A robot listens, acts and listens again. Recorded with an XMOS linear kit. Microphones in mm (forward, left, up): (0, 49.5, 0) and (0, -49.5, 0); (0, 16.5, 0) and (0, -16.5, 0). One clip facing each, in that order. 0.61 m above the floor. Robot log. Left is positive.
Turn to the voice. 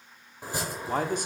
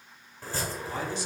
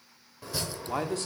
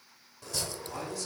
note: The man speaking: about 50° left or 130° left.
cmd yaw +50
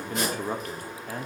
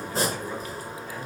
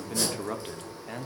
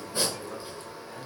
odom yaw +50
note: So it is at 65° left.
cmd yaw +65
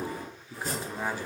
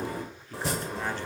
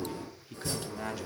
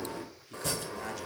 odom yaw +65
note: The man speaking is now 10° left.
cmd yaw +10
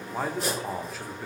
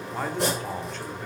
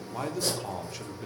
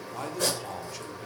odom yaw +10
end: Facing the man speaking, 1 to 2 m away.